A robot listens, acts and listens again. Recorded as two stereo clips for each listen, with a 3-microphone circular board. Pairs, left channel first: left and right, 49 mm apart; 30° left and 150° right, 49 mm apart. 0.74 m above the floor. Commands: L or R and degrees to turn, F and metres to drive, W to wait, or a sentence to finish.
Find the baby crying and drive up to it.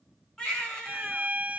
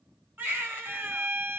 L165
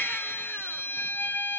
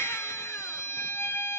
W
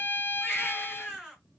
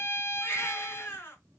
F1.0
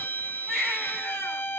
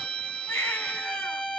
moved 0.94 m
R10
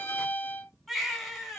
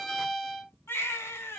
F1.0
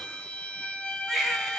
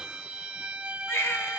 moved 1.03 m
F1.0
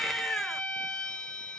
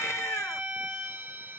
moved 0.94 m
F1.0
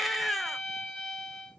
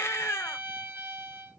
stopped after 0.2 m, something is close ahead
I am next to the baby crying.